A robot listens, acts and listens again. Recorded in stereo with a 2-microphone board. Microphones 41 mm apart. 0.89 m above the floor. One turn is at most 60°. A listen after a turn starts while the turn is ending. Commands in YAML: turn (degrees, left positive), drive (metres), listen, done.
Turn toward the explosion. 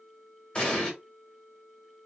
turn: 25
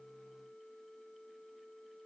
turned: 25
listen: true
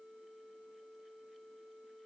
done: "I heard an explosion, but can't make it out now. It was about straight ahead or 130° left."